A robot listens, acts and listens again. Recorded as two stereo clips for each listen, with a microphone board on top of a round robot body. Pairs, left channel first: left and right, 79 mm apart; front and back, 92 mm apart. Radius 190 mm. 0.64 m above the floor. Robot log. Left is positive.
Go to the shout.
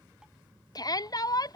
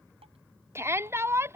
note: The shout: 120° left.
cmd yaw +120
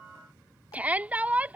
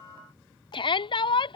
note: The shout is now 20° right.
cmd yaw -20
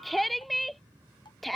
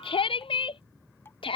cmd fwd 1.0
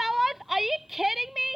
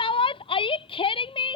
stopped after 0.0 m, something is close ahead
end: Something is in my way. I am facing the shout but have not reached it.